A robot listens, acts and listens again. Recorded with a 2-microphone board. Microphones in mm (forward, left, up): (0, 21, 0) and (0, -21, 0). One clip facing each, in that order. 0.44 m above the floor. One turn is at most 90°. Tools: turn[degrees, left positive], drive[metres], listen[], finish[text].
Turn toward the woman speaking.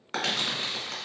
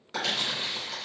Action: listen[]
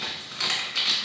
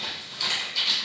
Action: listen[]
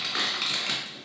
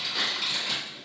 Action: finish[I can't make out a woman speaking to turn to.]